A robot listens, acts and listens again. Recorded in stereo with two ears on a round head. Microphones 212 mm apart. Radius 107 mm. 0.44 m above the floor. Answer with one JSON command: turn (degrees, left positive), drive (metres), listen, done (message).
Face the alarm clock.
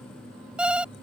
{"turn": -30}
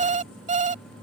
{"turn": -145}
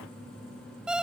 {"done": "Facing the alarm clock."}